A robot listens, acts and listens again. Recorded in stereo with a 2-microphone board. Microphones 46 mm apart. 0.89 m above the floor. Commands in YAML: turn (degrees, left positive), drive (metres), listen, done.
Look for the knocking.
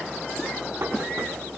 turn: -70
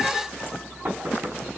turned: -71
turn: -40
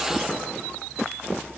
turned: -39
listen: true
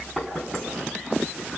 done: "Found it: knocking, straight ahead, over 4 m away."